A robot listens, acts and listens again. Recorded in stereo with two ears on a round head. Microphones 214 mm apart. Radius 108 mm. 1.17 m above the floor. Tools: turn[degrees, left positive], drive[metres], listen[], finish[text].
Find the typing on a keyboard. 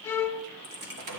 Thought: The typing on a keyboard: about 40° right or 140° right.
Action: turn[-40]
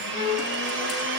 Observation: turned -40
Action: listen[]
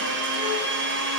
Action: listen[]
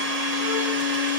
Action: finish[I heard typing on a keyboard, but can't make it out now. It was about straight ahead or 100° right.]